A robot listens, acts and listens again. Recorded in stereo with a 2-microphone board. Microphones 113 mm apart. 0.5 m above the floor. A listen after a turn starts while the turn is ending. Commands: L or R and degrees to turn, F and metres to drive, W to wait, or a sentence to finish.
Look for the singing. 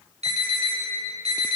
W
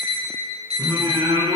R35
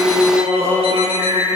R115
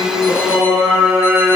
R20
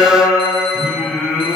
Facing the singing, over 4 m away.